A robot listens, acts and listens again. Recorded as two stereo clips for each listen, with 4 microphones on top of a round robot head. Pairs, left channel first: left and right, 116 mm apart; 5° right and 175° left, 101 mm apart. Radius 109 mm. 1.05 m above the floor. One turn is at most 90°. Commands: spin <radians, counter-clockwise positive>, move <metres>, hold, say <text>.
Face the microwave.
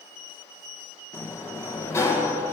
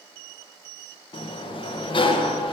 hold
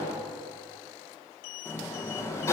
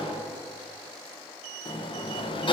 hold
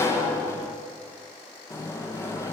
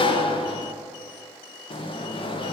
say I can't make out a microwave to turn to.